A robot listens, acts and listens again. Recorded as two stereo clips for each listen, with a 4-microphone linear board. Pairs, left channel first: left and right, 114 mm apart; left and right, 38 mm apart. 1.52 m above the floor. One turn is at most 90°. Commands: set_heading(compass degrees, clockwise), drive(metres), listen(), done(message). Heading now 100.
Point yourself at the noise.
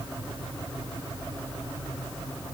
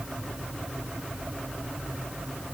listen()
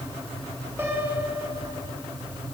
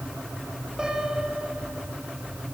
set_heading(120)
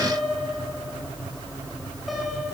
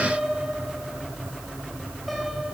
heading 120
done("Found it: a piano, straight ahead, 2 to 4 m away.")